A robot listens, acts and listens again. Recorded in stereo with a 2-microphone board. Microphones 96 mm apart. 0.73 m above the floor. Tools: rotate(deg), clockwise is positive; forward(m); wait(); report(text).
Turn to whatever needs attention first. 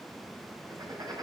wait()
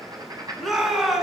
rotate(30)
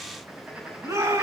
rotate(150)
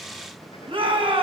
rotate(65)
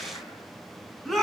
report("Facing the shout.")